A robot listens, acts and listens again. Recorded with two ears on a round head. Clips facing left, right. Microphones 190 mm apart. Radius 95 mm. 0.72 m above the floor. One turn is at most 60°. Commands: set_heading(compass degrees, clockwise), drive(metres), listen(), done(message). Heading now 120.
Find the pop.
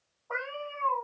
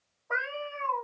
listen()
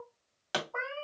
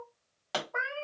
set_heading(100)
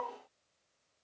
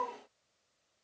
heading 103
listen()
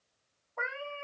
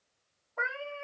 done("I heard a pop, but can't make it out now. It was about straight ahead or 145° left.")